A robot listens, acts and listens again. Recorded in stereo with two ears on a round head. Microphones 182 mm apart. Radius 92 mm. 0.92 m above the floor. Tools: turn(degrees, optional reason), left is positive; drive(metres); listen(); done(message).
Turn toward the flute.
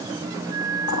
turn(degrees=-40, reason="The flute: about 40° right or 140° right.")
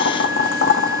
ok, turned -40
listen()
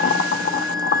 done("Facing the flute.")